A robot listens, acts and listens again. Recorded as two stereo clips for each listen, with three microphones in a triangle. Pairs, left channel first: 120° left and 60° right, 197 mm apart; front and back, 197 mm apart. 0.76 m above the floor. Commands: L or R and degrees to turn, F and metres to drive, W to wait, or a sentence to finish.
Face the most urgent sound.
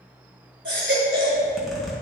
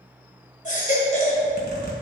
R50
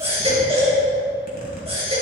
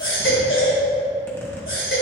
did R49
Found it: a baby crying, straight ahead.